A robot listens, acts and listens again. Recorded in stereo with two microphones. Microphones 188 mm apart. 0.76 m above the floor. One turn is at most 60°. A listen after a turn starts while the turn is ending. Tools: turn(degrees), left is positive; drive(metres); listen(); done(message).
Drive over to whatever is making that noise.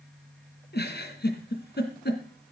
turn(degrees=60)
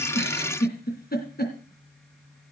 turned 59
turn(degrees=55)
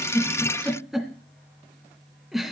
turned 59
drive(metres=1.0)
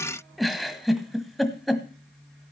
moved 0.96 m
drive(metres=1.0)
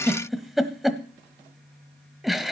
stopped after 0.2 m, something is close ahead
done("Arrived at the giggle, straight ahead.")